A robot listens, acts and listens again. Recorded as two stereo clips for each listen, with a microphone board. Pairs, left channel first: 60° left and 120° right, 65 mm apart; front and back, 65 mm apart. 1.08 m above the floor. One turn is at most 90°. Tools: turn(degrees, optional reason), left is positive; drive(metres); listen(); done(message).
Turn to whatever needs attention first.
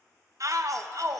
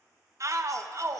turn(degrees=-90, reason="The shout: 150° right.")
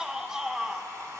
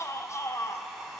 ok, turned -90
turn(degrees=-40, reason="The shout is now 40° right.")
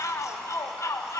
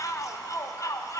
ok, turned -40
turn(degrees=25, reason="The shout is now 25° left.")
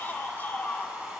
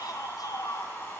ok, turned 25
done("Facing the shout.")